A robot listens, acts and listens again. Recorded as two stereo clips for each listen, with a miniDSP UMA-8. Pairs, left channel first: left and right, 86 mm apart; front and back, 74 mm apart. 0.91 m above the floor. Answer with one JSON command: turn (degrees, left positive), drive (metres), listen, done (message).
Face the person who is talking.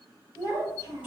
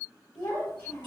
{"turn": 30}
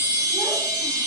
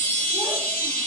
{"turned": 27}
{"listen": true}
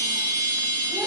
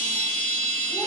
{"listen": true}
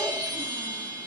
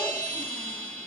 {"done": "Facing where the child speaking came from. I can't hear it now."}